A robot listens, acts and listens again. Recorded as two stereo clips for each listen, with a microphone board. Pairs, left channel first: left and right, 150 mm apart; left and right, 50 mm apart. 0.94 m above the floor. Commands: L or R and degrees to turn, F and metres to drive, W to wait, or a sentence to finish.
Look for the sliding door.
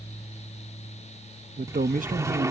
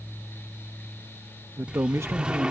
R20
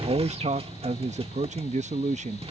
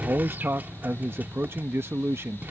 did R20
R140
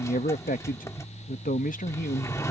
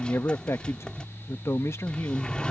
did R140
L20
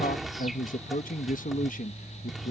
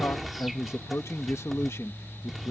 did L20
Found it: a sliding door, straight ahead.